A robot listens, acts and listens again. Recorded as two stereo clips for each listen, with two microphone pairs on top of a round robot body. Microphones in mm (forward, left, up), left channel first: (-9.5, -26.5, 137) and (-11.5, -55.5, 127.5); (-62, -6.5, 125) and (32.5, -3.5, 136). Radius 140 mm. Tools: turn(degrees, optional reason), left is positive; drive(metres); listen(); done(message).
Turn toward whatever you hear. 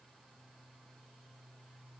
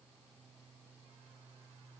listen()
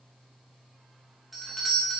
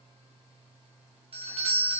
turn(degrees=-10, reason="The doorbell: 10° right.")
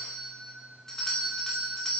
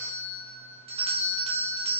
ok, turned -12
done("Facing the doorbell.")